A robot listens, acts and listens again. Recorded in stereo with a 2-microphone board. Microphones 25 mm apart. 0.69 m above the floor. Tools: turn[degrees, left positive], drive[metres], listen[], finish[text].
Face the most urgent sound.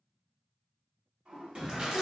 Thought: The shout: about 45° right or 135° right.
Action: turn[-45]
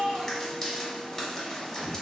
Thought: So it is at 80° right.
Action: turn[-80]
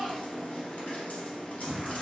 Action: finish[Facing the shout, 2 to 4 m away.]